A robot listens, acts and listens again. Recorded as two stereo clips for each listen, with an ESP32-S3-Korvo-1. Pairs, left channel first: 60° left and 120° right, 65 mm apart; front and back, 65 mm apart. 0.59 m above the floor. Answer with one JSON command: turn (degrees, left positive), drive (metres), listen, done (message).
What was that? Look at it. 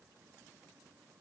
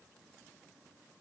{"listen": true}
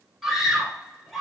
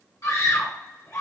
{"turn": -35}
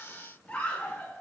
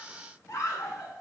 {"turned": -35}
{"turn": -10}
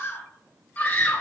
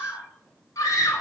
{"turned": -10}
{"done": "Facing the scream, 1 to 2 m away."}